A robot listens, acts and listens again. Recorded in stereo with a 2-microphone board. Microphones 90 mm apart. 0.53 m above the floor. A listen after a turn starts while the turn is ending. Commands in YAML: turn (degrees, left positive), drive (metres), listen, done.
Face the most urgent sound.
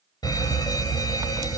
turn: 50
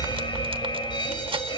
turn: 75
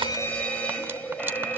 turn: 15
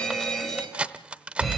done: "Facing the fire alarm."